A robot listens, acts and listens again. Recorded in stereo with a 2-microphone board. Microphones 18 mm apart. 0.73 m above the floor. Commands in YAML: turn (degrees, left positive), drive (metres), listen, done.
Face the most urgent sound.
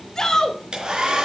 turn: 40
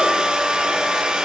listen: true
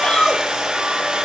turn: 100
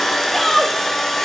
turn: 10
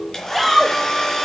done: "Facing the shout, 2 to 4 m away."